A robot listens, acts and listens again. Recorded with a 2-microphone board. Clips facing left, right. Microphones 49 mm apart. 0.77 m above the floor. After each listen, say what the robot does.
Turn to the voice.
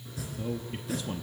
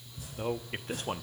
Turn 50° right.
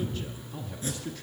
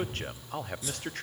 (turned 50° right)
Turn 70° right.
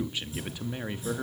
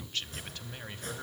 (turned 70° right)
Turn 15° left.
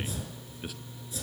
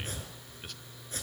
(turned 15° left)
Turn 10° left.
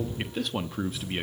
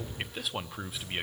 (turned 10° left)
Facing the man speaking, under 1 m away.